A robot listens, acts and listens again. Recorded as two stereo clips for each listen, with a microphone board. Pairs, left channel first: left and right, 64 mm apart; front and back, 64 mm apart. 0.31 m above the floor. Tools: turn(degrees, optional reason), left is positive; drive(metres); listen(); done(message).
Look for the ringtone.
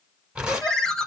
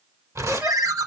turn(degrees=165, reason="The ringtone: 165° left.")
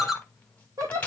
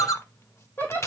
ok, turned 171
done("Found it: a ringtone, straight ahead, under 1 m away.")